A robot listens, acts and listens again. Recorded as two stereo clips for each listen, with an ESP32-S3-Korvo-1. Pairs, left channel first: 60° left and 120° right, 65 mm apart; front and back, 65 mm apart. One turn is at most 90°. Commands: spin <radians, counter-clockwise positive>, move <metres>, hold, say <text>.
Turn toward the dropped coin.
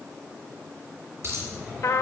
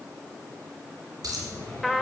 spin -1.57
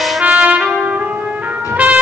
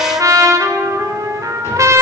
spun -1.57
spin -1.22
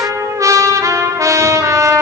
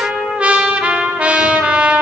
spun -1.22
say Facing where the dropped coin came from. I can't hear it now.